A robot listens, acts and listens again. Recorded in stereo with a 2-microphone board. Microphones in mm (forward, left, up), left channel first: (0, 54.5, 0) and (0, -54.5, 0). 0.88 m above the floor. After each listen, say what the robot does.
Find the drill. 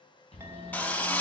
Turn 30° left.
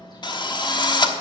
Turn 140° left.
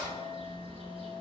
Keep listening.
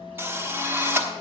Turn 20° right.
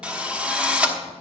Turn 10° right.
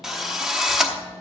Found it: a drill, straight ahead, 1 to 2 m away.